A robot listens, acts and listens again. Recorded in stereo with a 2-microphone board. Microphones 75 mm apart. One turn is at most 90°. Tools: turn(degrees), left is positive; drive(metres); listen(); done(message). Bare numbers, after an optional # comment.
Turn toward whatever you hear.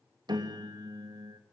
# The piano: about 75° right or 105° right.
turn(-75)
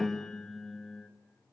done("Facing the piano.")